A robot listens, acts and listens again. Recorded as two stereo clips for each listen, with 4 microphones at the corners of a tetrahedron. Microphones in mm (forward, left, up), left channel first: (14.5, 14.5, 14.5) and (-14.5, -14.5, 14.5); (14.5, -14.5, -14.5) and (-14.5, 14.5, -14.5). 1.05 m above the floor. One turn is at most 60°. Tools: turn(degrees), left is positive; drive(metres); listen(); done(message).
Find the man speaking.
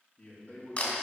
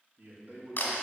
turn(degrees=60)
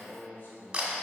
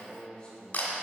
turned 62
turn(degrees=20)
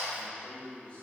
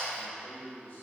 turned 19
turn(degrees=-10)
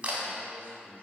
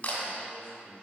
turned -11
listen()
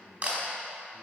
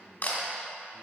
turn(degrees=-10)
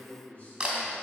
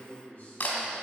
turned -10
done("Found it: a man speaking, straight ahead, 2 to 4 m away.")